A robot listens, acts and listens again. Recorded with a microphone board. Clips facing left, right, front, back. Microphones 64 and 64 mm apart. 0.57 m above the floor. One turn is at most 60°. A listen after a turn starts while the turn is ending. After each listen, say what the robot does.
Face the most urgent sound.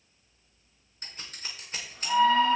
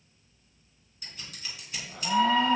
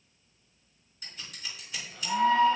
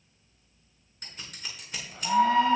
Turn 60° right.
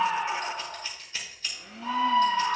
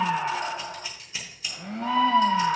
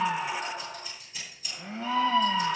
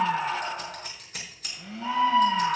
Turn 60° right.
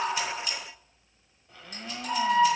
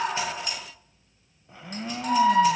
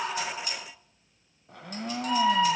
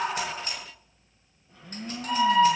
Turn 60° right.
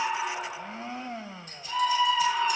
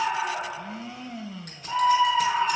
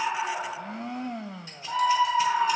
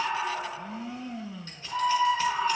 Turn 25° right.
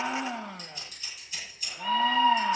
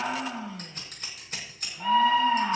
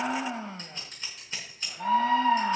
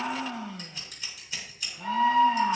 Facing the scream.